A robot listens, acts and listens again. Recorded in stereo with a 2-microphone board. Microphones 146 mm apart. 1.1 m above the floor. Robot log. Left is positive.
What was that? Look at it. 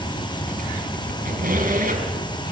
cmd yaw -90
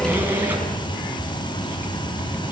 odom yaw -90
note: So it is at 15° right.
cmd yaw -15
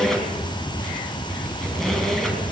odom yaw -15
end: Found it: a squeak, straight ahead, over 4 m away.